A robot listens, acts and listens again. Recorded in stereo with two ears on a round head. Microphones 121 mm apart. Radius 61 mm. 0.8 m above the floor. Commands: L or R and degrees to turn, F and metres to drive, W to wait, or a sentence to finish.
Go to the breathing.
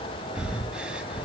R30
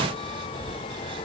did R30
R140
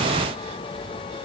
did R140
W
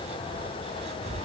R50
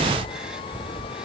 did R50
F1.0
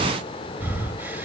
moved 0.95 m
R15
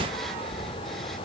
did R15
F1.0
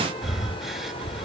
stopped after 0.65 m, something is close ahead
I am next to the breathing.